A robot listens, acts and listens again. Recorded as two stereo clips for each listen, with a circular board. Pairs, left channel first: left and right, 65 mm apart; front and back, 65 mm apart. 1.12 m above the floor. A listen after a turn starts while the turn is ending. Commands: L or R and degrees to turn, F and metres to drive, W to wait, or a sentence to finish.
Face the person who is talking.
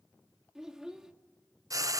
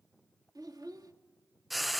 R170
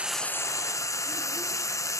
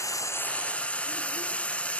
W
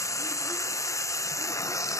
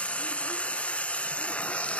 W
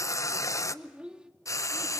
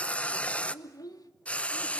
R15
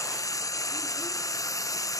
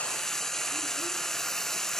W
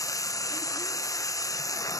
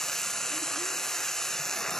W
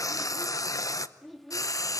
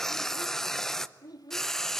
Found it: a child speaking, straight ahead.